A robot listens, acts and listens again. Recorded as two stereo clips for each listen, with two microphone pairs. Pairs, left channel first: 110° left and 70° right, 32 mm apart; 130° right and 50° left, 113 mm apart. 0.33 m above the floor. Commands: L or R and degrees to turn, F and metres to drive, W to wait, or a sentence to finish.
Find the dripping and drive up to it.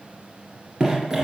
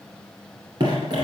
F1.0
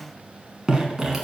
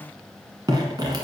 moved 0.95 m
F1.0
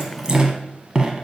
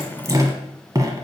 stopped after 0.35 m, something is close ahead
R10
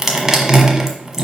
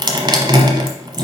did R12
I am next to the dripping.